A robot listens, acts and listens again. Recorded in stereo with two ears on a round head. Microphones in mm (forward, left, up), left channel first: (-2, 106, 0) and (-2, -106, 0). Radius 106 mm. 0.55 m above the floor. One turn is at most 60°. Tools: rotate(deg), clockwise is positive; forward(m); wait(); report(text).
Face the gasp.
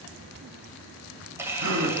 rotate(60)
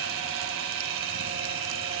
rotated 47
wait()
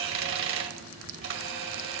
report("I heard a gasp, but can't make it out now. It was about 25° right or 65° right.")